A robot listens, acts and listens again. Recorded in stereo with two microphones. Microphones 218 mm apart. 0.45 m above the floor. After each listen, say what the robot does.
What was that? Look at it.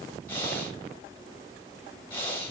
Turn 30° left.
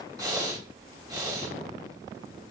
Turn 15° right.
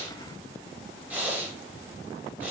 Found it: breathing, straight ahead.